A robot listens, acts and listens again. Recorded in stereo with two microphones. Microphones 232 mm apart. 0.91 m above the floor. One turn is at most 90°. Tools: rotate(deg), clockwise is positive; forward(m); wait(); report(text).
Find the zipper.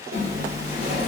rotate(70)
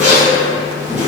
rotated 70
report("Found it: a zipper, straight ahead, 1 to 2 m away.")